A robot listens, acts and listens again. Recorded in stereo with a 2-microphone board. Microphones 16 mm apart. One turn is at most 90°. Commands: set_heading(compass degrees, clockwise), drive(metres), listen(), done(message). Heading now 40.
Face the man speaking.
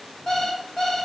listen()
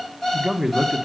set_heading(65)
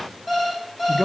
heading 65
done("Facing the man speaking, 1 to 2 m away.")